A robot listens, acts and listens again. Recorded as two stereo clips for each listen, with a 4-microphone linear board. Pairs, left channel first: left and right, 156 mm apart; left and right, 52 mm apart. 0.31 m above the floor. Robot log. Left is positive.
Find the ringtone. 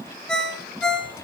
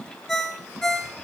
cmd yaw +30
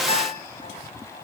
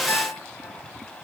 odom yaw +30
cmd idle
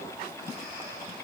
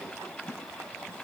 cmd idle
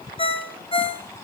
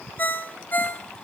note: So it is at 145° left.
cmd yaw +145
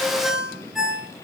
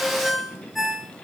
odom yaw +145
end: Facing the ringtone, 2 to 4 m away.